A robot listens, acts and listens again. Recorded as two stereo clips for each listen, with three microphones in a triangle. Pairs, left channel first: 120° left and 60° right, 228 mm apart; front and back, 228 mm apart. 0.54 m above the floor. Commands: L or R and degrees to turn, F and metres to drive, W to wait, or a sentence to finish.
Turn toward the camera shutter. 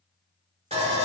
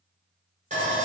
W
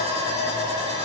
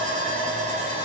W
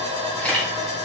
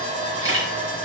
R155
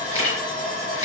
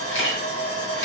R35
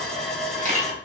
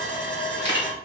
Facing the camera shutter.